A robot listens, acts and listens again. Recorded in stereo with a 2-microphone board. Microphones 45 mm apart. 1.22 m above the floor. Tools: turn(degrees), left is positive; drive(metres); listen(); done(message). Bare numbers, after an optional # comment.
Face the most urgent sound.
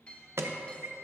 turn(-90)
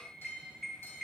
done("Found it: an alarm, straight ahead, under 1 m away.")